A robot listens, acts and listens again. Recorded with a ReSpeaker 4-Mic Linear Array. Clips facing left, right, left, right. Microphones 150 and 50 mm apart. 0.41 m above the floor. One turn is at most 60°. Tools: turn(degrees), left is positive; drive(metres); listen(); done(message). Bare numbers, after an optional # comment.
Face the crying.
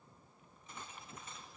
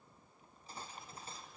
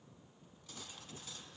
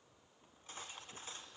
listen()
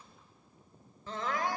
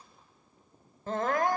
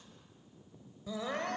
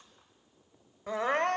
# The crying: about 50° right or 130° right.
turn(-50)
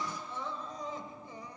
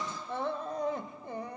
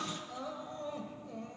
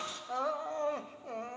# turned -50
# So it is at 70° right.
turn(-60)
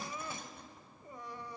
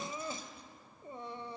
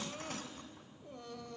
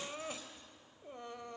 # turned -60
# The crying is now 30° right.
turn(-30)
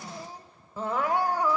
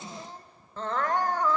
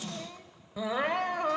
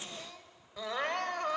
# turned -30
# The crying is now 10° left.
turn(10)
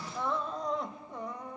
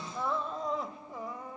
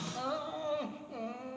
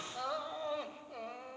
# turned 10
done("Found it: crying, straight ahead.")